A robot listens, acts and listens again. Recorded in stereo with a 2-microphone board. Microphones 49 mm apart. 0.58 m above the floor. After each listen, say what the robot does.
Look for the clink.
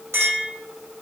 Turn 90° right.
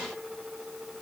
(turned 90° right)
Keep listening.
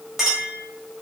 Turn 10° right.
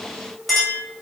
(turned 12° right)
Found it: a clink, straight ahead.